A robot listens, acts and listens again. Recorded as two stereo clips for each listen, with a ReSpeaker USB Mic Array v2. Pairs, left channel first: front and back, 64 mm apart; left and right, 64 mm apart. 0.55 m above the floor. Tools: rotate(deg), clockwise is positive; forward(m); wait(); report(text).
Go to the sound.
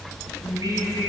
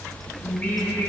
rotate(-155)
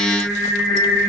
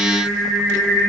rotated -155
rotate(-25)
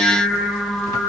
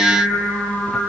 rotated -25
forward(1.0)
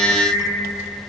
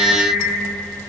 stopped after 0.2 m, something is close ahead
report("Something is in my way. I am facing the singing but have not reached it.")